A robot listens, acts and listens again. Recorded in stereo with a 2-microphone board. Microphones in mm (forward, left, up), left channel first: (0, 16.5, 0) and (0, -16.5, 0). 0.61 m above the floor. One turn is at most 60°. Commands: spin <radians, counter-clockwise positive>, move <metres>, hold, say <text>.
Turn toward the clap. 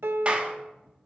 spin -0.61
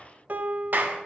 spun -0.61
spin -1.05
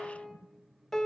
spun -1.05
spin -0.79
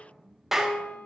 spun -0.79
say Facing the clap, 1 to 2 m away.